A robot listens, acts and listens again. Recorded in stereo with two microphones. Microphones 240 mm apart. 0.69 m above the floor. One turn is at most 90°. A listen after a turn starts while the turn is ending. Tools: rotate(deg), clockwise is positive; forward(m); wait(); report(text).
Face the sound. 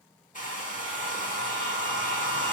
rotate(-35)
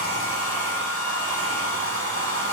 rotate(-90)
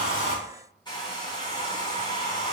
rotate(-15)
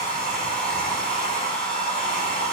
report("Facing the hair dryer, 1 to 2 m away.")